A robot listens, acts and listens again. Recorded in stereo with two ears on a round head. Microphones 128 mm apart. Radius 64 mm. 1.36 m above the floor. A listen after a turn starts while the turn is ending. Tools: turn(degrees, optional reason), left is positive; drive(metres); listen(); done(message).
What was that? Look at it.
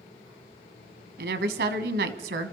turn(degrees=-90)
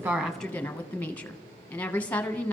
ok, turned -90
turn(degrees=10, reason="So it is at 10° left.")
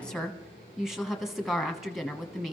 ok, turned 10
done("Found it: a woman speaking, straight ahead.")